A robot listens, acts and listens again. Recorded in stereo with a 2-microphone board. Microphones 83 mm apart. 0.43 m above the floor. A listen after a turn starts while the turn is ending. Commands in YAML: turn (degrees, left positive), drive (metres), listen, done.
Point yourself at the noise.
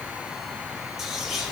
turn: 30
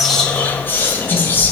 turn: 150
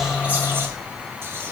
listen: true
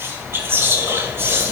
turn: -35
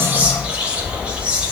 turn: -15
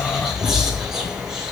done: "Facing the whispering."